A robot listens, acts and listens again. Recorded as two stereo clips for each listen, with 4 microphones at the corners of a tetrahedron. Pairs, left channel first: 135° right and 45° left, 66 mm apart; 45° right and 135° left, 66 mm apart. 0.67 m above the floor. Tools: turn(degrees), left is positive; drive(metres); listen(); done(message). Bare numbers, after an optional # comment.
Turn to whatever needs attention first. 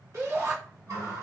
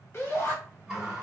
# The shout: 10° left.
turn(10)
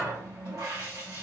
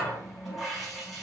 listen()
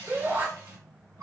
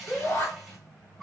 done("Found it: a shout, straight ahead.")